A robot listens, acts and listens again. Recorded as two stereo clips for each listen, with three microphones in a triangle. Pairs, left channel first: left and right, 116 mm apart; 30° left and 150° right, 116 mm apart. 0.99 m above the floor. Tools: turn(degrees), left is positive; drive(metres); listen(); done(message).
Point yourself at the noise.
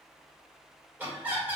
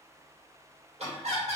turn(degrees=-165)
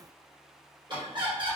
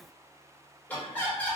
turn(degrees=-45)
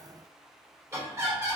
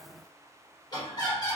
turn(degrees=-25)
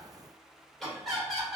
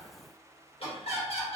done("Facing the laughter, 1 to 2 m away.")